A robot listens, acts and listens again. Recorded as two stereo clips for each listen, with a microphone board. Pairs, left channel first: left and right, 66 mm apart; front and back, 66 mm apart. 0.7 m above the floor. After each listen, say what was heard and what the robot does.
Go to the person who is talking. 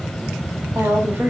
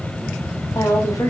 The woman speaking: 35° right. Turn 35° right.
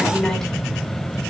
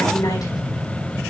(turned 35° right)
Keep listening.
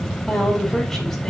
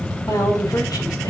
Drive 1.0 m forward.
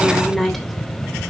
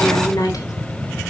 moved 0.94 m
Drive 1.0 m forward.
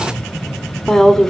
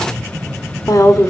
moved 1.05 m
The woman speaking is now 10° left. Turn 10° left.
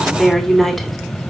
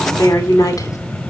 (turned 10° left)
Drive 1.0 m forward.
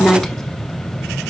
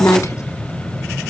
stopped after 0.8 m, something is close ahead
The woman speaking is now 10° left. Turn 10° left.
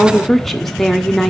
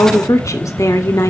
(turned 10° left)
Arrived at the woman speaking, straight ahead.